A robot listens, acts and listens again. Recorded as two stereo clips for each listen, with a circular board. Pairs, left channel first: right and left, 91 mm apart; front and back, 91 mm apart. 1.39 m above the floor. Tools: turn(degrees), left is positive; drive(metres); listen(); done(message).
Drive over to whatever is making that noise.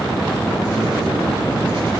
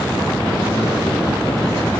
listen()
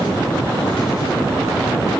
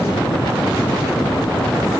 listen()
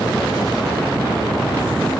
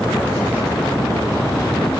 done("I can't make out anything.")